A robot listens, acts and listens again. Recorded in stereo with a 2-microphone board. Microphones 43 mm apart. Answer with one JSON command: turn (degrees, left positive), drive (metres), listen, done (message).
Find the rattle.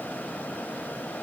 {"listen": true}
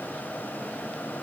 {"listen": true}
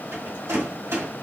{"turn": -90}
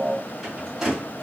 {"turn": -10}
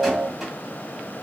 {"listen": true}
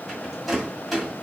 {"done": "Facing the rattle."}